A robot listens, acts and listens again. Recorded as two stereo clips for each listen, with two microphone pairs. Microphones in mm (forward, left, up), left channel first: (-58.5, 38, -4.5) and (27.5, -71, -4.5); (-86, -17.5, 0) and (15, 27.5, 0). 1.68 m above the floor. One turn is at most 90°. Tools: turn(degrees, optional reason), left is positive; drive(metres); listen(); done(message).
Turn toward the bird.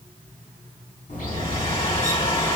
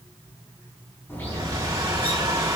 turn(degrees=90, reason="The bird: 130° left.")
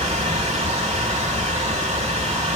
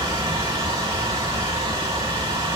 turn(degrees=35, reason="The bird is now 35° left.")
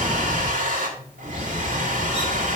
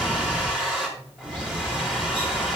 turn(degrees=-10, reason="The bird is now 10° right.")
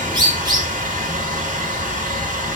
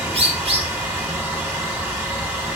done("Found it: a bird, straight ahead.")